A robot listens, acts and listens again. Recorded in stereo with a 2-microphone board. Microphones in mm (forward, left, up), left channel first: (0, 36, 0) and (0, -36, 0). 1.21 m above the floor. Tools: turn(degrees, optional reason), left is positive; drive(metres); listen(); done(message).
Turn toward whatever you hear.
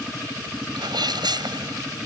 turn(degrees=-90)
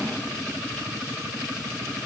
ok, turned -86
done("I heard a sneeze from this way, but can't make it out now.")